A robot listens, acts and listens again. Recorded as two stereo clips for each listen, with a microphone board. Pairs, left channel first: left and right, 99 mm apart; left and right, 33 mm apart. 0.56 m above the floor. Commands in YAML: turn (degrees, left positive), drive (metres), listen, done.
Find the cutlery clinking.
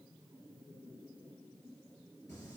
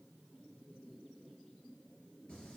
listen: true
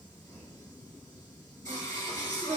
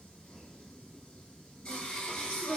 listen: true
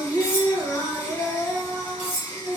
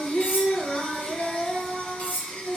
turn: 70
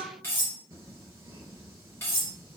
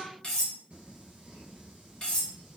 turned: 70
turn: 25
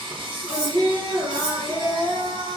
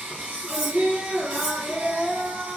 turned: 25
listen: true
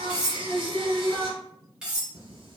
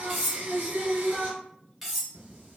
turn: -10
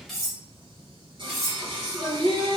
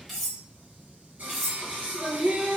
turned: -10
done: "Facing the cutlery clinking."